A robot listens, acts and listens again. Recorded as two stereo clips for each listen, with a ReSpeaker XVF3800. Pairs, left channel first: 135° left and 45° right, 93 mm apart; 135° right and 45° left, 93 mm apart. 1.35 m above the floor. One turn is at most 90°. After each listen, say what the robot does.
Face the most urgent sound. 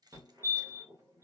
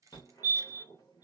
Turn 90° right.
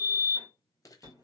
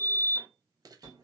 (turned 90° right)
Found it: a fire alarm, straight ahead.